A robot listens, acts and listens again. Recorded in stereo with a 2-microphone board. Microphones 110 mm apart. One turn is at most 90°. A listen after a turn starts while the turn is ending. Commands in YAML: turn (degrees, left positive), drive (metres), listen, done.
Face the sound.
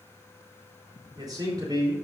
turn: -35
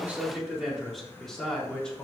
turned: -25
turn: 10
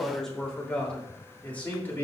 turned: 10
turn: 20
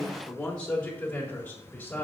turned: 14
turn: 15
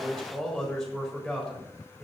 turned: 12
done: "Facing the man speaking, 2 to 4 m away."